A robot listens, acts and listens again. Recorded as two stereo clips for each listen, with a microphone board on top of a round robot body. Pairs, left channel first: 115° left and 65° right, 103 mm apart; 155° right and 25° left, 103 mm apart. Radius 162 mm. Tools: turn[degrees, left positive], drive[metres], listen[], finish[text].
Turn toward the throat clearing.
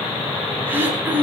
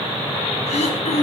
Thought: The throat clearing: 140° right.
Action: turn[-140]
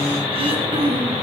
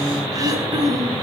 Thought: The throat clearing is now 30° right.
Action: turn[-30]
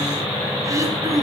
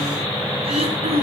Action: finish[Facing the throat clearing, over 4 m away.]